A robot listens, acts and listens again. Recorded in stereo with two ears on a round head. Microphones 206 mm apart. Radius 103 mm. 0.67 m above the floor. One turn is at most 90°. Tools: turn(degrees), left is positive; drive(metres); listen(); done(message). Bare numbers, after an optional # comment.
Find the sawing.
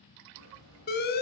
# The sawing: about 70° right or 110° right.
turn(-70)
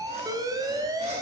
listen()
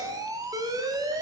listen()
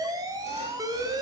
done("I heard sawing, but can't make it out now. It was about straight ahead or 40° right.")